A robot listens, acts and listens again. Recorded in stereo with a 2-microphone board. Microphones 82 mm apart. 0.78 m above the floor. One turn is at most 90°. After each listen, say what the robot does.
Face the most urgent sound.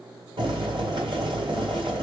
Keep listening.
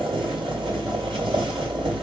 Keep listening.
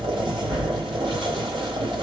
I can't make out anything urgent to turn to.